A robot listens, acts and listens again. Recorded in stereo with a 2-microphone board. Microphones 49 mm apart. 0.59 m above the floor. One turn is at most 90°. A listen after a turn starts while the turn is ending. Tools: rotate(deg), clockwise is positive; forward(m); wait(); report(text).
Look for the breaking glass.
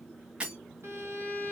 rotate(25)
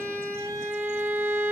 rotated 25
wait()
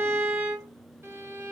report("I heard breaking glass, but can't make it out now. It was about straight ahead or 130° right.")